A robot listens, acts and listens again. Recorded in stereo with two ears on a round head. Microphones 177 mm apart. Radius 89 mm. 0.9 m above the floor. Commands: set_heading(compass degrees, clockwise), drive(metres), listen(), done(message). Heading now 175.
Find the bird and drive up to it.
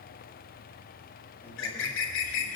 set_heading(105)
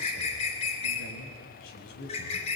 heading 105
set_heading(70)
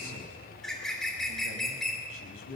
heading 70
drive(1.0)
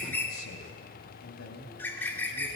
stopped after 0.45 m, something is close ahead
set_heading(60)
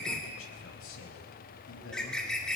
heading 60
done("Something is in my way. I am facing the bird but have not reached it.")